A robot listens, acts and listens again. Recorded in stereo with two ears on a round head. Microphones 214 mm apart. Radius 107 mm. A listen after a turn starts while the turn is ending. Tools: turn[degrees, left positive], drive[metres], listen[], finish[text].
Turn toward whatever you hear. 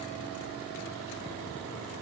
Action: listen[]
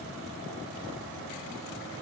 Action: listen[]
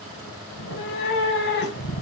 Thought: The cat meowing: about 45° left or 135° left.
Action: turn[45]
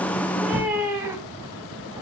Thought: So it is at 10° right.
Action: turn[-10]
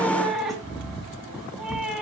Action: finish[Found it: a cat meowing, straight ahead.]